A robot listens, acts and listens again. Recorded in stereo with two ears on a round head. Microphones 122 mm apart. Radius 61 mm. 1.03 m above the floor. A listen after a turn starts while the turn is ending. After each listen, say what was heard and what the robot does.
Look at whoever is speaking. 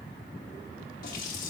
Keep listening.
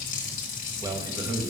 The man speaking: about 25° right or 155° right. Turn 25° right.
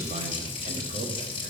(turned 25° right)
Keep listening.
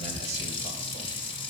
Keep listening.
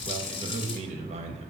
So it is at 125° right. Turn 125° right.
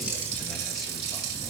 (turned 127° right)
Keep listening.
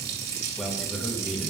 Found it: a man speaking, straight ahead, 1 to 2 m away.